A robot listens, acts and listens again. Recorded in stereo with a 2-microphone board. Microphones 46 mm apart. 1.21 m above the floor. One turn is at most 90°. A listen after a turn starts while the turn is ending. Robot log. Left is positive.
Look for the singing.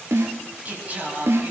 note: The singing: about 35° right or 145° right.
cmd yaw -35
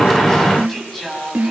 end: Found it: singing, straight ahead.